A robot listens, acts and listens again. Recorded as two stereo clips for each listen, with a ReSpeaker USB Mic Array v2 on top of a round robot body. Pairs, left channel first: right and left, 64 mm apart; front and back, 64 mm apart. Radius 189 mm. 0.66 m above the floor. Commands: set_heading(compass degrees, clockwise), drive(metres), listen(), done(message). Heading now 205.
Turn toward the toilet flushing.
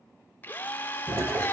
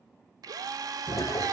set_heading(165)
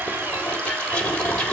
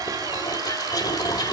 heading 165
set_heading(180)
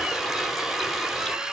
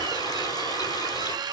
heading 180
listen()
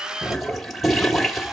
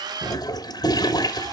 done("Facing the toilet flushing, 1 to 2 m away.")